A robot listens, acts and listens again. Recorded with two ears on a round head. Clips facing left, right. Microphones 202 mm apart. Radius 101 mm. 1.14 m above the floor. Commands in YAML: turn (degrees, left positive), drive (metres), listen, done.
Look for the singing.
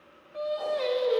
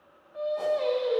turn: 50
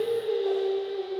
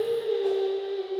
done: "Facing the singing."